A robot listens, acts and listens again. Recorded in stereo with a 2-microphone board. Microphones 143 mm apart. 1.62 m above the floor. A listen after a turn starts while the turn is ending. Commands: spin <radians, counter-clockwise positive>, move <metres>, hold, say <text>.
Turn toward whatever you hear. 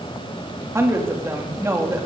spin -0.35
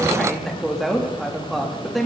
say Found it: a woman speaking, straight ahead.